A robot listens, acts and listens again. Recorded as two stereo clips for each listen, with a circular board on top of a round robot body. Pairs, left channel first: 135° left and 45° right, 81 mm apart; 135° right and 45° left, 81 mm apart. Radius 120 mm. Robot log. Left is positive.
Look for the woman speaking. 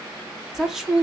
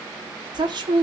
note: The woman speaking: 40° left.
cmd yaw +40
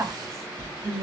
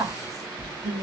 end: Facing the woman speaking.